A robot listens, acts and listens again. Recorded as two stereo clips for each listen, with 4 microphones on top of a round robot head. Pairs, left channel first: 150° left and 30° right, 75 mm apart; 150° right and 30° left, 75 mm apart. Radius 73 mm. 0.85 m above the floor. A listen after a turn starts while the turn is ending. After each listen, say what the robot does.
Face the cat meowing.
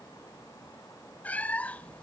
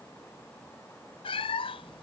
Turn 135° right.
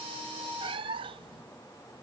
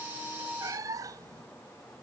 Turn 15° right.
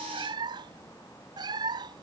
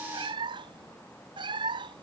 Found it: a cat meowing, straight ahead.